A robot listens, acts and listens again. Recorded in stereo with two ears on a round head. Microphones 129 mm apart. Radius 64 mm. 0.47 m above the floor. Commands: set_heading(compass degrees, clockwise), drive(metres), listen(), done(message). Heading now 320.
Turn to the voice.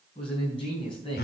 set_heading(280)
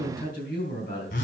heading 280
set_heading(170)
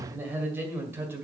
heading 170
set_heading(185)
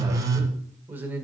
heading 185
set_heading(200)
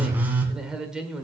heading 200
done("Found it: a man speaking, straight ahead.")